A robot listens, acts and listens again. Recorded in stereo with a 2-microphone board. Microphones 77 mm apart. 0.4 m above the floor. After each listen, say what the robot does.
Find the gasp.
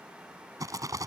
Keep listening.
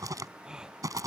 Turn 30° right.
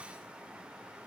Keep listening.
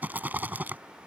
I heard a gasp, but can't make it out now. It was about 20° left or 140° right.